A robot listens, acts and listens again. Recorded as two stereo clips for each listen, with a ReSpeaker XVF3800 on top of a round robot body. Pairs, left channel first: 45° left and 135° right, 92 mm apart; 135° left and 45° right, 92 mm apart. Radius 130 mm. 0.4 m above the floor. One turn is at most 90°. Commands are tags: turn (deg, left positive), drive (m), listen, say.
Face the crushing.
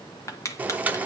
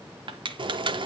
<turn deg="-15"/>
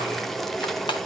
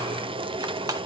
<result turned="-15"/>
<listen/>
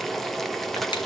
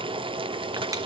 <listen/>
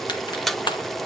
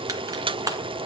<turn deg="10"/>
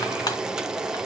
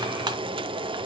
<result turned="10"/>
<listen/>
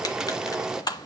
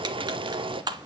<say>Found it: crushing, straight ahead.</say>